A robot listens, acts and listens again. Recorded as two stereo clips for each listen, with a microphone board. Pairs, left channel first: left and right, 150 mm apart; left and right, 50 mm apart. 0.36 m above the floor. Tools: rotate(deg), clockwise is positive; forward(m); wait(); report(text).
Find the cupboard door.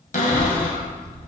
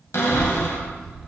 rotate(-60)
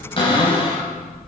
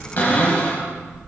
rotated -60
rotate(-45)
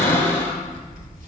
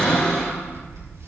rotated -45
rotate(-20)
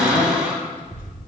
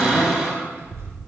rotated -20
report("Facing the cupboard door.")